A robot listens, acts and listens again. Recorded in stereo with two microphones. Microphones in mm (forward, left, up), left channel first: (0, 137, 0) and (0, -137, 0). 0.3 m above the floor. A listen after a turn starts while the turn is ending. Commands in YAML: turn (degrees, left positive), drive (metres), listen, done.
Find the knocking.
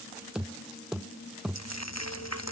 turn: 30
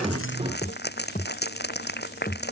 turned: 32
turn: 150
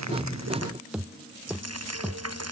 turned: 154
done: "Found it: knocking, straight ahead."